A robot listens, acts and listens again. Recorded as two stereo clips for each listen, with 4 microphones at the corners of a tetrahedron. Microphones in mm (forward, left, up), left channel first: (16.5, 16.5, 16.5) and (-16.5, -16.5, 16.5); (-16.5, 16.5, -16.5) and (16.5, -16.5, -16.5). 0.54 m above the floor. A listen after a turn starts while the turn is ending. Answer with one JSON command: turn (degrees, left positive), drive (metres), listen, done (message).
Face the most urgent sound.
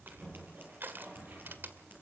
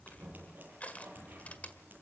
{"listen": true}
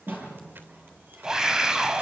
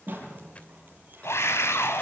{"turn": 150}
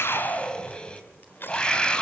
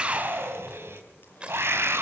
{"turn": -25}
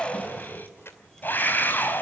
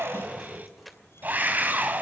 {"done": "Facing the scream."}